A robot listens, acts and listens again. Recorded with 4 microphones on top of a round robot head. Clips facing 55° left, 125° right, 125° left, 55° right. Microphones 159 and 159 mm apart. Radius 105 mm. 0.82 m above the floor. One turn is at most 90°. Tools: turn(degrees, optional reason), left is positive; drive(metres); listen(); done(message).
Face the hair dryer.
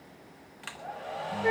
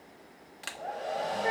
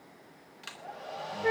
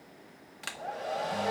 turn(degrees=-80, reason="The hair dryer: 80° right.")
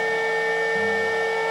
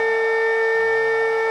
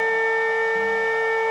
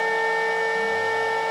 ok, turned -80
listen()
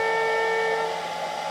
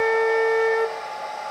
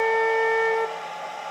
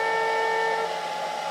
done("Facing the hair dryer.")